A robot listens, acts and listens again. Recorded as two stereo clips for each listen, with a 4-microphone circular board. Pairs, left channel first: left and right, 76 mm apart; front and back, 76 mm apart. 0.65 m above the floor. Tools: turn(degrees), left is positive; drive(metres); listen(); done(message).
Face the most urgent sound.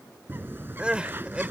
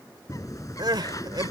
turn(degrees=-165)
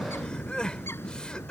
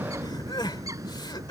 listen()
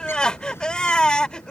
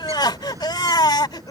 turn(degrees=15)
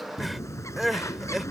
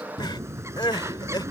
done("Found it: crying, straight ahead.")